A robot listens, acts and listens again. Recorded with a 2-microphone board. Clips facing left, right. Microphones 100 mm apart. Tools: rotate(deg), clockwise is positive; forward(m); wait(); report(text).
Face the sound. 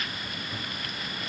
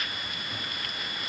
wait()
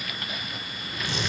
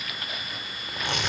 rotate(65)
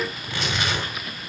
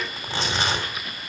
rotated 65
rotate(30)
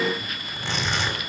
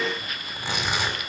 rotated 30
rotate(10)
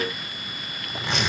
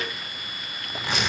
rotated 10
report("Found it: tearing paper, straight ahead, 2 to 4 m away.")